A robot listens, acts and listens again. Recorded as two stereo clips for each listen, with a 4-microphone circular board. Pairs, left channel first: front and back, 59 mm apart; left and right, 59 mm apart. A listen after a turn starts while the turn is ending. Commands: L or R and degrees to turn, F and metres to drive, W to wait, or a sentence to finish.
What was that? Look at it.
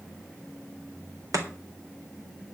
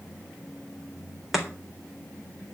R175
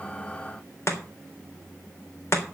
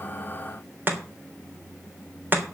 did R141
R35
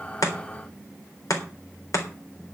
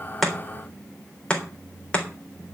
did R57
L20
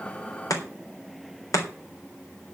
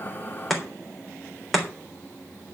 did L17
Facing the chopping.